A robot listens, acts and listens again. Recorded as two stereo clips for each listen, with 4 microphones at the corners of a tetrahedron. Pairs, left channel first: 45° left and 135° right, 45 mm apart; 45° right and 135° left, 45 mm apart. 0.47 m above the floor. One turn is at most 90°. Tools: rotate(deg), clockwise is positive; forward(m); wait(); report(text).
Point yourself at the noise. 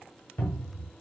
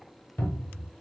rotate(-15)
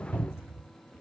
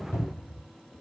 report("Facing the cupboard door, 1 to 2 m away.")